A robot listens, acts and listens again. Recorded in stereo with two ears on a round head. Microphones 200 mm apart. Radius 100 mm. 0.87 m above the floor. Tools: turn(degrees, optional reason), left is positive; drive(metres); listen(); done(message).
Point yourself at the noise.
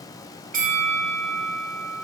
turn(degrees=-35, reason="The bell: about 35° right or 145° right.")
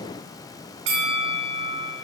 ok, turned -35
turn(degrees=-105, reason="So it is at 105° right.")
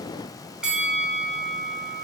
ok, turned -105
done("Found it: a bell, straight ahead.")